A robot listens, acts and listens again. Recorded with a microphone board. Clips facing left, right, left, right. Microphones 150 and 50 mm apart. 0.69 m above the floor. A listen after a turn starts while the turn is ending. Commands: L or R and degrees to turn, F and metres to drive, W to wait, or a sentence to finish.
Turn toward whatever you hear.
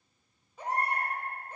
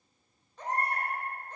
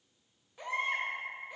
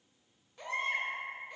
L30
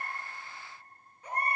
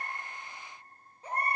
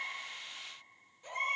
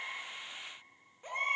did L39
R30
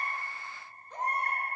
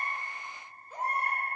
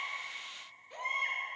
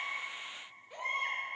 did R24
R10
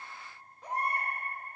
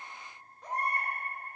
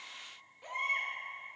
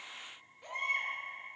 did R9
Facing the baby crying.